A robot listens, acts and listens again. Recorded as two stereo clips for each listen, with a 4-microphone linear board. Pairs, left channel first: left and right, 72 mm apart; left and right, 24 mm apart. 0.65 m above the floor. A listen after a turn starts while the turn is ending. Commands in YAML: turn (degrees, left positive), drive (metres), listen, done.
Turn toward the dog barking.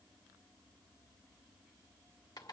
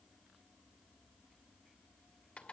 listen: true
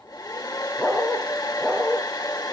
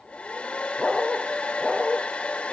turn: 30
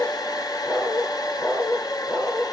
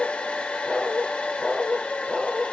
turn: 140
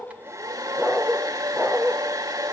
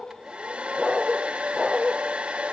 done: "Facing the dog barking, over 4 m away."